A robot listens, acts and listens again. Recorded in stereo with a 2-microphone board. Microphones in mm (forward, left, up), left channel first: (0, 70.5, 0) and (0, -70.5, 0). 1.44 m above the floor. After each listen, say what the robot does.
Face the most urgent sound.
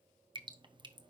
Keep listening.
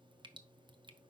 Keep listening.
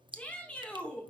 Turn 30° left.
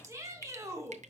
Turn 20° right.
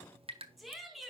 Found it: a shout, straight ahead.